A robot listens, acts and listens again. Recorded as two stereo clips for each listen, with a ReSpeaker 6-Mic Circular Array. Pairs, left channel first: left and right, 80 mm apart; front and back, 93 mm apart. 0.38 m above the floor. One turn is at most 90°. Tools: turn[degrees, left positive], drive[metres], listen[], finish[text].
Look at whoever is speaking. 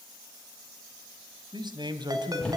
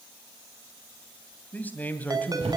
Thought: The man speaking: 70° right.
Action: turn[-70]
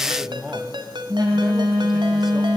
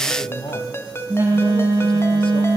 Action: finish[Found it: a man speaking, straight ahead.]